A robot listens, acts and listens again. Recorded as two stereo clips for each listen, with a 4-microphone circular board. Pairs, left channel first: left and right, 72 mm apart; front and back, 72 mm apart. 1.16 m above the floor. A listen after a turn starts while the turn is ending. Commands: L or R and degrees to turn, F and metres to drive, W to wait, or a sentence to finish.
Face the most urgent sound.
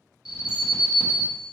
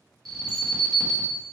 L85
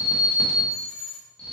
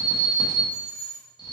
L15
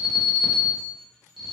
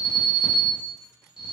Found it: an alarm, straight ahead.